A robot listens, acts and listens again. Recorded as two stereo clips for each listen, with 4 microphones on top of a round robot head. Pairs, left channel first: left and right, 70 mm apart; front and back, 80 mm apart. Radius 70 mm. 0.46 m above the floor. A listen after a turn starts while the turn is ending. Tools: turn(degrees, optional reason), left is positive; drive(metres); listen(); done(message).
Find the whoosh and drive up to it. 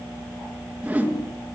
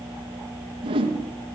turn(degrees=-160, reason="The whoosh: 160° right.")
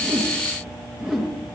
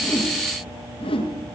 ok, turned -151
turn(degrees=-10, reason="The whoosh is now 10° right.")
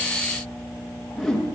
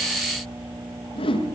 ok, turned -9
drive(metres=1.0)
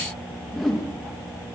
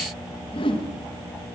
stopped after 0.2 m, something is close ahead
done("Blocked. The whoosh is further on, straight ahead.")